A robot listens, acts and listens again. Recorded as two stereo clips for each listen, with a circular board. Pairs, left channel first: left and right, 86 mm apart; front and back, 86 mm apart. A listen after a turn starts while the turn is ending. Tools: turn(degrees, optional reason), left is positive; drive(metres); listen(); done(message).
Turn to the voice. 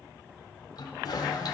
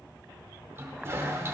listen()
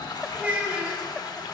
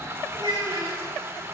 turn(degrees=-160, reason="The child speaking: 160° right.")
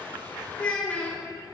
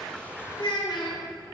turn(degrees=20, reason="The child speaking is now 20° left.")
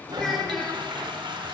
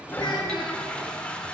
done("Facing the child speaking, 2 to 4 m away.")